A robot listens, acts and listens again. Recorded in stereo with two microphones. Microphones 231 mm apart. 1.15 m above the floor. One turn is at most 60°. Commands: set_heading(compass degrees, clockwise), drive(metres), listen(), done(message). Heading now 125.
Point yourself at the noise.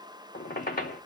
set_heading(90)
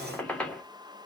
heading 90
done("Found it: a squeak, straight ahead.")